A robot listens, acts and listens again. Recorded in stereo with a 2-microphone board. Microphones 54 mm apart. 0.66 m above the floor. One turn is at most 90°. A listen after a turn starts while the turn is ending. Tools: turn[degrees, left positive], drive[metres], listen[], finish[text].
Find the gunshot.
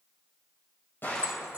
Thought: The gunshot: about 40° left or 140° left.
Action: turn[40]
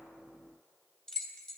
Action: listen[]
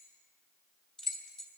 Action: finish[I heard a gunshot, but can't make it out now. It was about straight ahead or 100° left.]